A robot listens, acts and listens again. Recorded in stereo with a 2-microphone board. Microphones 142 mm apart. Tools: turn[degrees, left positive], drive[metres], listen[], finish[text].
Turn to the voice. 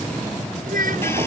Action: turn[-90]
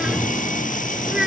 Action: finish[Found it: a child speaking, straight ahead.]